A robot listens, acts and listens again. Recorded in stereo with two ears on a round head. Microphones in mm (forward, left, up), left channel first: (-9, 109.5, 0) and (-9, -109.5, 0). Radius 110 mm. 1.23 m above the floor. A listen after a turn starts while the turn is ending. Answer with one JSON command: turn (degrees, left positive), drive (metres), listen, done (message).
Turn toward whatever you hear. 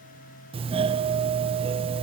{"turn": -25}
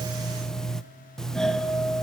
{"done": "Found it: a doorbell, straight ahead, 1 to 2 m away."}